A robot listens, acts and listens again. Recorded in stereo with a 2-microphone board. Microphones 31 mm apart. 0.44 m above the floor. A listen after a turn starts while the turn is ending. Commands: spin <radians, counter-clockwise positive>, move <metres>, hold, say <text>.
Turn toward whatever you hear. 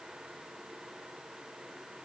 hold
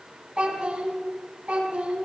spin -0.61
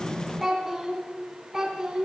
spin -0.17
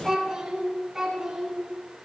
spin -0.17
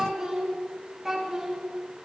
say Facing the child speaking, 2 to 4 m away.